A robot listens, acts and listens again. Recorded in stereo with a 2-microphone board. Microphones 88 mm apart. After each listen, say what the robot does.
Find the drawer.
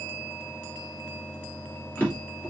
Turn 20° left.
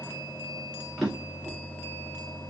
Found it: a drawer, straight ahead, 2 to 4 m away.